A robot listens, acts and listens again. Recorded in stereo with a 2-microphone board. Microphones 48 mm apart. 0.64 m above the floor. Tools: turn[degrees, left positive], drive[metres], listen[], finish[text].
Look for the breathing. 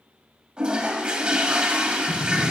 Action: turn[90]
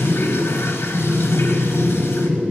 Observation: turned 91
Action: finish[Found it: breathing, straight ahead.]